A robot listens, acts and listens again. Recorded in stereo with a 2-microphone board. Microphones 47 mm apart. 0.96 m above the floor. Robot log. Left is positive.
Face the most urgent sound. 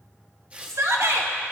cmd yaw -90
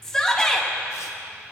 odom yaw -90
note: So it is at 10° left.
cmd yaw +10
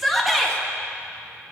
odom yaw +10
end: Found it: a shout, straight ahead, 1 to 2 m away.